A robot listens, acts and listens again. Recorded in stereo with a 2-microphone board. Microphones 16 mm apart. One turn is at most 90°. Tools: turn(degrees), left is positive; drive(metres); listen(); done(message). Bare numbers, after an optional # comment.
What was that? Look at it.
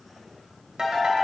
# The ringtone: about 65° right or 115° right.
turn(-65)
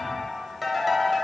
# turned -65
# So it is at 10° right.
turn(-10)
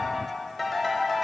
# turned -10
done("Facing the ringtone.")